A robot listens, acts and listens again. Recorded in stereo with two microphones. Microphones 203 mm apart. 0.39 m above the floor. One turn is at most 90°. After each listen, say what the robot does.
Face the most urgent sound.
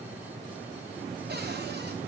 Keep listening.
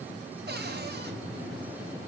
Keep listening.
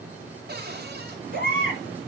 Turn 50° right.
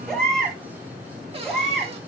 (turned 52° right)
Facing the baby crying, over 4 m away.